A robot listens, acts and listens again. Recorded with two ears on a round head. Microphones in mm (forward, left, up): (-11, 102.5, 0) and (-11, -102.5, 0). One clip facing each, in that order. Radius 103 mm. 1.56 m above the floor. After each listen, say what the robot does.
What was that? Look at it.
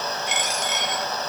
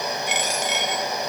Turn 50° right.
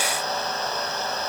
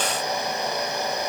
Keep listening.
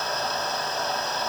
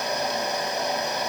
I heard a dropped coin, but can't make it out now. It was about straight ahead or 80° right.